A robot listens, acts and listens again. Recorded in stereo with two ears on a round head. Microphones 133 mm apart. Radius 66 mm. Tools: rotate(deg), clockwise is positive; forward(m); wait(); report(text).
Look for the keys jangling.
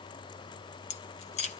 rotate(-45)
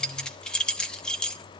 report("Found it: keys jangling, straight ahead, under 1 m away.")